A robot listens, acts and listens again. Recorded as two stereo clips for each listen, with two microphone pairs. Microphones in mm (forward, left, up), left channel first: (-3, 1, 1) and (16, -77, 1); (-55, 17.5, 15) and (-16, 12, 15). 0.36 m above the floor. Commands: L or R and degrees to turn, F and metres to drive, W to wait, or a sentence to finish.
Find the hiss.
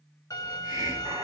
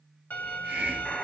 R45
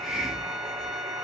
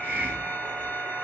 L15
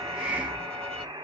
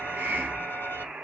Found it: a hiss, straight ahead.